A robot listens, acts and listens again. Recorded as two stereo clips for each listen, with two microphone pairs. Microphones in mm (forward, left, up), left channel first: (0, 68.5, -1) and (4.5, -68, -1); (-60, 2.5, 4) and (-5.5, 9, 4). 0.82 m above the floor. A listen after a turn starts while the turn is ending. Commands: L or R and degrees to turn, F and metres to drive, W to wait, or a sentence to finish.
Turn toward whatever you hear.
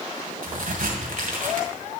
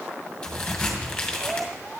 R95
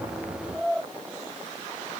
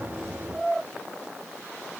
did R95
I heard a crack from this way, but can't make it out now.